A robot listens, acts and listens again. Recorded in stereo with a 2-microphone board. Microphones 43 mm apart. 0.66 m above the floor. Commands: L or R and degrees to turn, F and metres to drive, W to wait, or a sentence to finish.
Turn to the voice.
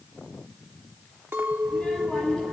L20
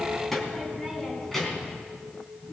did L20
L30
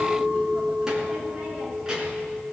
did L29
R15
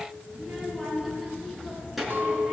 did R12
Facing the child speaking, over 4 m away.